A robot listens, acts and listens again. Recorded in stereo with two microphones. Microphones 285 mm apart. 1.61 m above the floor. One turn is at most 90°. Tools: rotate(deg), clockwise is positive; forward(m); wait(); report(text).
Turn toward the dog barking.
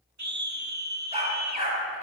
rotate(25)
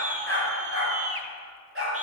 rotate(90)
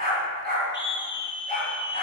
rotate(35)
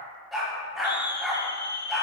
report("Found it: a dog barking, straight ahead.")